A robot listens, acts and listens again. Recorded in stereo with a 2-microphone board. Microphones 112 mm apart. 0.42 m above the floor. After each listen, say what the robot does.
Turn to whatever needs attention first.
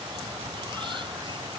Keep listening.
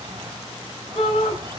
Turn 65° left.
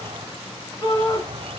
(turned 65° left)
Turn 40° left.
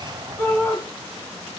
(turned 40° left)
Turn 20° left.
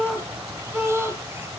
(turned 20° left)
Found it: a shout, straight ahead, over 4 m away.